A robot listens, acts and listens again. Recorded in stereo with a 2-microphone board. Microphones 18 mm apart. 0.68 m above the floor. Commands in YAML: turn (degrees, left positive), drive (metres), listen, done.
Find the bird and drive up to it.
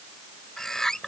turn: 25
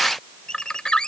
turn: 125
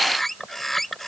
turn: 15
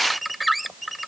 drive: 1.0
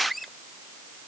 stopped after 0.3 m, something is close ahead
done: "Blocked. The bird is further on, straight ahead."